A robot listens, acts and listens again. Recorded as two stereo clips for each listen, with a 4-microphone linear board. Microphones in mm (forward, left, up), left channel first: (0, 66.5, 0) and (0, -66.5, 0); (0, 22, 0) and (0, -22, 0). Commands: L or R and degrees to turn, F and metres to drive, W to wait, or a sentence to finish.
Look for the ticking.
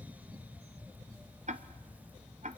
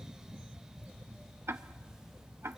R65
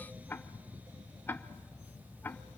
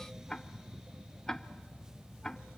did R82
L15
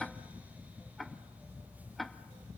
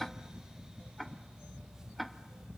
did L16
Found it: ticking, straight ahead.